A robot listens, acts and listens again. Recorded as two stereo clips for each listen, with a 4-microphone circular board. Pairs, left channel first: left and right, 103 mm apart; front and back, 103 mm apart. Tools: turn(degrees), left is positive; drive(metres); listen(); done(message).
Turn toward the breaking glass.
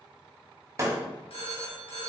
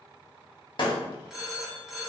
turn(degrees=-35)
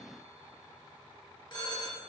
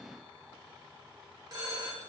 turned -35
done("I heard breaking glass from this way, but can't make it out now.")